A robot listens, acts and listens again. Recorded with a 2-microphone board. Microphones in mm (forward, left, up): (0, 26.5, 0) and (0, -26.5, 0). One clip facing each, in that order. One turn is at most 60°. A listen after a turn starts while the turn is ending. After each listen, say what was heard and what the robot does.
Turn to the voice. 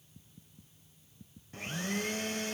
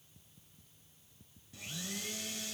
Keep listening.
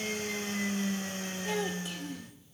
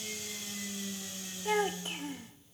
The child speaking: about 35° right or 145° right. Turn 35° right.
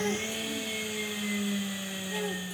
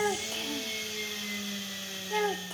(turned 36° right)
So it is at 100° right. Turn 60° right.
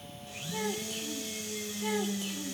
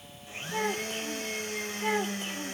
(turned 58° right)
The child speaking is now 40° right. Turn 40° right.
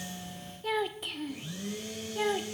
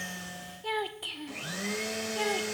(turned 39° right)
Facing the child speaking, 1 to 2 m away.